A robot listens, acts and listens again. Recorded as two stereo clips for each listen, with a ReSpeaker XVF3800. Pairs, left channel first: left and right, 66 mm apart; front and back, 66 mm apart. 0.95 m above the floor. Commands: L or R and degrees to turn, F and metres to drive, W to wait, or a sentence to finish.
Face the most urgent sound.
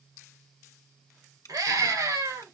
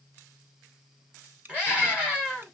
R105
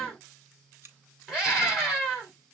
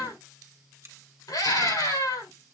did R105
Facing the scream.